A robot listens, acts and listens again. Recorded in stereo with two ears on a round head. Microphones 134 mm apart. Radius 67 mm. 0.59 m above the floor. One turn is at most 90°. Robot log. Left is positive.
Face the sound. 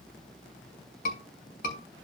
note: The scream: about 65° left or 115° left.
cmd yaw +65
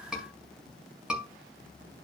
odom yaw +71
end: Facing the scream, over 4 m away.